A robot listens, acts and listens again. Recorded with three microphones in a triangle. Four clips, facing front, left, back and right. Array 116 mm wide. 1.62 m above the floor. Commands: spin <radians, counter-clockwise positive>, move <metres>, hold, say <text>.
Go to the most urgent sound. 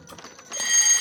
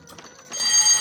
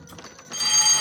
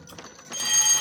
spin 3.05
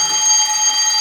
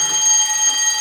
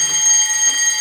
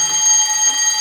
move 1.0
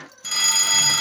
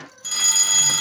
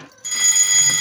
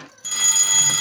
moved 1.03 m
move 1.0
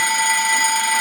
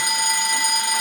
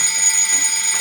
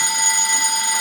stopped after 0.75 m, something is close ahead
say Arrived at the fire alarm, straight ahead.